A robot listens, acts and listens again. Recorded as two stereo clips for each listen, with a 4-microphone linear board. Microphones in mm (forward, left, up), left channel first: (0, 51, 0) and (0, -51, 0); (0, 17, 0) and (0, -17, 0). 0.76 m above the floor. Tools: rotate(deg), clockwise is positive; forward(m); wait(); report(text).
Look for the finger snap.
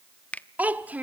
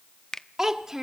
rotate(-15)
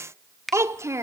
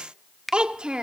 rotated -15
report("Facing the finger snap, under 1 m away.")